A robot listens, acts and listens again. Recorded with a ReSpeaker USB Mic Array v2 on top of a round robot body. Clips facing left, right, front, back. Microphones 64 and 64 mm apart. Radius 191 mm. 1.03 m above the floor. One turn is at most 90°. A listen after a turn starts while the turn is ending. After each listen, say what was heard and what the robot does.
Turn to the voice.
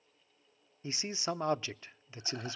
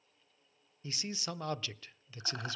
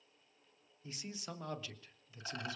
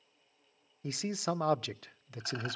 The man speaking: 155° left. Turn 90° left.
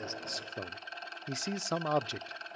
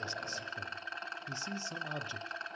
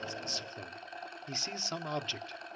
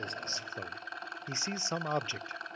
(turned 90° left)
The man speaking is now 110° left. Turn 90° left.
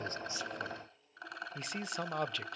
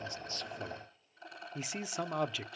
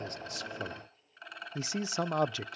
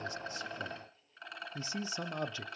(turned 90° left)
Found it: a man speaking, straight ahead.